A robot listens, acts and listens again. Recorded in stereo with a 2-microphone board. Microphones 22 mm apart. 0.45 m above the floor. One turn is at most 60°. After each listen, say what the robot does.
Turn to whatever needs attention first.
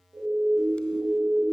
Turn 60° right.
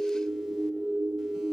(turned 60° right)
Turn 50° right.
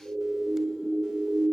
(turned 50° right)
Turn 20° right.
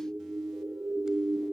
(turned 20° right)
Found it: a siren, straight ahead.